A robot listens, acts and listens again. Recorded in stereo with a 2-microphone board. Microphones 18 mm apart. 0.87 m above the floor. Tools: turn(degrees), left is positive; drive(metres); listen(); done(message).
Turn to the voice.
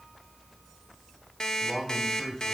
turn(degrees=35)
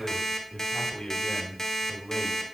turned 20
turn(degrees=125)
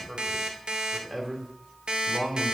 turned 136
turn(degrees=-15)
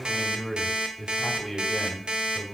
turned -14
done("Facing the man speaking.")